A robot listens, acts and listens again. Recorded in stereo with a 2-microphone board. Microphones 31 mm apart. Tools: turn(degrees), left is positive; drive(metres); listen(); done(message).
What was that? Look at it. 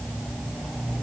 listen()
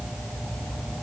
listen()
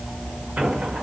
turn(degrees=-70)
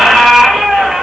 turn(degrees=-15)
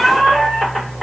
done("Found it: a squeak, straight ahead, under 1 m away.")